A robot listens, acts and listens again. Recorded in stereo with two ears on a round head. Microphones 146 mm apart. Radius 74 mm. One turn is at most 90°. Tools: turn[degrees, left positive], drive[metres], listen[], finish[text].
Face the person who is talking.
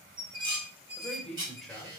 Action: turn[30]
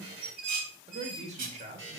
Thought: So it is at 45° right.
Action: turn[-45]
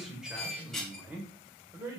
Thought: The man speaking is now 15° right.
Action: turn[-15]
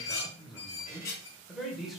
Action: finish[Found it: a man speaking, straight ahead, 2 to 4 m away.]